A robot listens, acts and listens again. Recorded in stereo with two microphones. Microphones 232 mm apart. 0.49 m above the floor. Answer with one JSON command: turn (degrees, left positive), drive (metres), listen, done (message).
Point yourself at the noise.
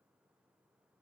{"listen": true}
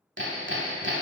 {"turn": -60}
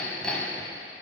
{"done": "Found it: hammering, straight ahead, 1 to 2 m away."}